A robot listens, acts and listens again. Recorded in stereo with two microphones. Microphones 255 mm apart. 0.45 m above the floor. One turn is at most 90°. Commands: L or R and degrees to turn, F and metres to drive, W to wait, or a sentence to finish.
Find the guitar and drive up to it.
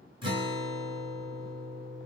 R20
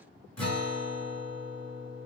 F1.0
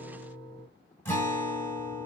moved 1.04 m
L10
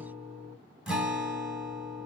F1.0
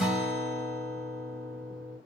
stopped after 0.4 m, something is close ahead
Arrived at the guitar, straight ahead.